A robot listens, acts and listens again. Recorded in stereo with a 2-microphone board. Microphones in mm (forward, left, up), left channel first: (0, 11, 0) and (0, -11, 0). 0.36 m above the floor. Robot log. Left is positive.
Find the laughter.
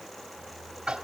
cmd idle
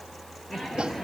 note: The laughter: about 20° left or 160° left.
cmd yaw +20
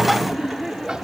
end: Facing the laughter, over 4 m away.